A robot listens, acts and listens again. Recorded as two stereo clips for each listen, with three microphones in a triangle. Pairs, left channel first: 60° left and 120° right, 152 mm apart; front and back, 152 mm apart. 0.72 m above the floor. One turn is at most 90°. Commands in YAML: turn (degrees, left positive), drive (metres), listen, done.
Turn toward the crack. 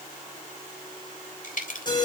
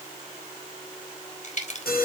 turn: 35
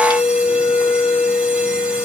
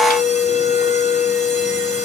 done: "Facing where the crack came from. I can't hear it now."